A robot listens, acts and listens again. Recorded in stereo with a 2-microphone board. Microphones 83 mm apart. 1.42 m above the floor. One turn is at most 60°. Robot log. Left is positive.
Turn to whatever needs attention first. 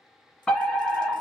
cmd yaw +30
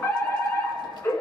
note: So it is at 145° left.
cmd yaw +60
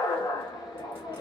note: The fire alarm is now 90° left.
cmd yaw +60
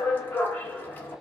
note: The fire alarm is now 30° left.
cmd yaw +30
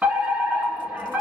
note: The fire alarm is now 20° right.
cmd yaw -20
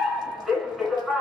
end: Facing the fire alarm.